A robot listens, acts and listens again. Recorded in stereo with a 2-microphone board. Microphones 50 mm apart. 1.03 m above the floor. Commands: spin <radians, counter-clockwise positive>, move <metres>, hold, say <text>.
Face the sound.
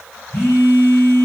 spin 0.79
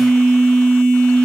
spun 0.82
say Facing the phone buzzing, 2 to 4 m away.